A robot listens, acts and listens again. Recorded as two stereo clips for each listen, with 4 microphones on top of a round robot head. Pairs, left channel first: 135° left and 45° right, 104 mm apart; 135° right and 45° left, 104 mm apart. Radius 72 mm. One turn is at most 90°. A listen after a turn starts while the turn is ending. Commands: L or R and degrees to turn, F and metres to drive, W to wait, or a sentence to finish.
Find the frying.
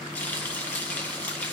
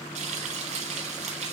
L55
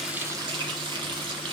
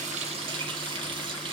Facing the frying.